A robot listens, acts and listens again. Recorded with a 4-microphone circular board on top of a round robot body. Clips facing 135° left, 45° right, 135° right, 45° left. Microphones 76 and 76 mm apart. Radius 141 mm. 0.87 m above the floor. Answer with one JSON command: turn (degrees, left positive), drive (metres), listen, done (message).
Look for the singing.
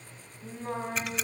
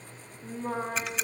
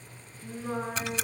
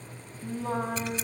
{"turn": 35}
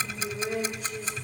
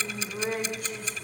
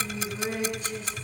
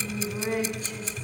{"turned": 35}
{"turn": -10}
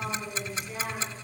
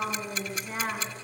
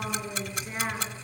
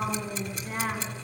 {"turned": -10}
{"done": "Found it: singing, straight ahead, over 4 m away."}